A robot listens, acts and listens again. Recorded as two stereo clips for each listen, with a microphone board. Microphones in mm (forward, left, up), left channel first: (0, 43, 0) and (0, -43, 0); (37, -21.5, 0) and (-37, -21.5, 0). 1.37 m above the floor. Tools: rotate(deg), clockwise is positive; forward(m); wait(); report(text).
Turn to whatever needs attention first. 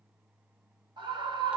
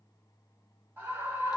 rotate(115)
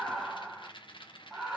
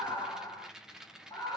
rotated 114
report("Facing the scream, 1 to 2 m away.")